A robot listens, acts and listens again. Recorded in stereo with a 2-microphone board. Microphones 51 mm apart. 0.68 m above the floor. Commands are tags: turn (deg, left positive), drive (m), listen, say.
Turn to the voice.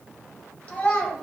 <turn deg="30"/>
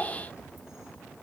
<turn deg="120"/>
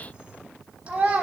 <turn deg="-25"/>
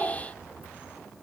<turn deg="-15"/>
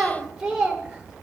<turn deg="-15"/>
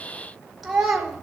<say>Found it: a child speaking, straight ahead, 1 to 2 m away.</say>